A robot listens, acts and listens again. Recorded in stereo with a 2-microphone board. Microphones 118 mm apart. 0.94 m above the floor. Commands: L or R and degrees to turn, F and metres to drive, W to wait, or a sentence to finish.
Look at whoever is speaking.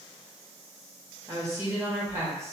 R25
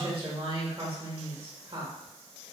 R125
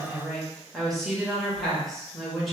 Facing the woman speaking.